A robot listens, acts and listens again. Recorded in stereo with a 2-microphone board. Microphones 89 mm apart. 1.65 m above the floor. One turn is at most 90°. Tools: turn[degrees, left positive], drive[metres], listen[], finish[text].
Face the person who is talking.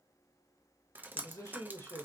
Thought: The man speaking: about 30° left or 150° left.
Action: turn[30]
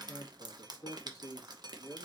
Thought: The man speaking: about 40° left or 140° left.
Action: turn[40]
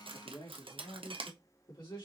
Thought: So it is at 120° left.
Action: turn[90]
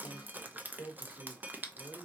Thought: The man speaking is now 55° left.
Action: turn[55]
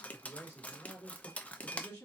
Thought: The man speaking is now 20° left.
Action: turn[20]
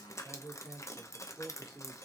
Action: finish[Facing the man speaking.]